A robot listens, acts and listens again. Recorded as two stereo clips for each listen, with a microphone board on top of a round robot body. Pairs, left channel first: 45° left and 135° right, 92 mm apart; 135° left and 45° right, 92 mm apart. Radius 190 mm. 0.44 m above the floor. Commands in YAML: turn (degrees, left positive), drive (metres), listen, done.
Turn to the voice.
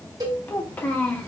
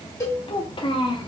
turn: 120
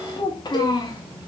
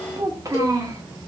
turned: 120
done: "Found it: a child speaking, straight ahead."